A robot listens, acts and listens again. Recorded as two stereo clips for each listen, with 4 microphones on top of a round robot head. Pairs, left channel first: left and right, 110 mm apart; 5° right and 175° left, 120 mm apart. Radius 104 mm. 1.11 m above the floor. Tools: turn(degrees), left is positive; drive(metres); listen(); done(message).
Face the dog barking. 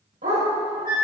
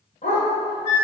turn(degrees=-55)
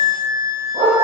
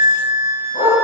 turn(degrees=-25)
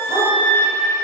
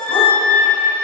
listen()
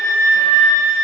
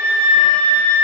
listen()
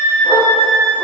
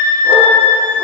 done("Facing where the dog barking came from. I can't hear it now.")